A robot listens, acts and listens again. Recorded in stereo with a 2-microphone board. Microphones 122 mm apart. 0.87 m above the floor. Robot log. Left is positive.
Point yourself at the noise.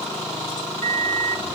cmd yaw -90
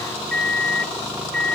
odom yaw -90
note: So it is at 10° left.
cmd yaw +10
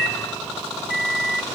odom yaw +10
end: Found it: a microwave, straight ahead, 1 to 2 m away.